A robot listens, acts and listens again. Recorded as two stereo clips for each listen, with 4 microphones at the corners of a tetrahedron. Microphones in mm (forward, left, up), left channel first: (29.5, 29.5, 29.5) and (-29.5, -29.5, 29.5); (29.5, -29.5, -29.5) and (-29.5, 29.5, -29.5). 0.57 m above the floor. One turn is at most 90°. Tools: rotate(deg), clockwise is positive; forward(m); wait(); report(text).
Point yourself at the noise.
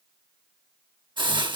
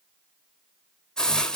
rotate(90)
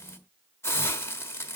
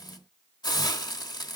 rotate(10)
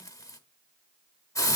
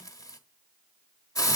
report("Found it: a hiss, straight ahead, 1 to 2 m away.")